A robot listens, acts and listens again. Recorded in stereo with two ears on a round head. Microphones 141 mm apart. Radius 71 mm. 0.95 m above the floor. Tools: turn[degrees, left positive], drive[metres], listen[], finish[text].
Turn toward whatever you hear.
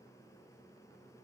Action: listen[]
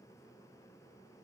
Action: listen[]
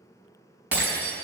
Action: turn[-30]
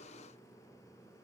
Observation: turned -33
Action: listen[]
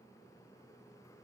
Action: finish[I heard breaking glass, but can't make it out now. It was about 20° left or 135° right.]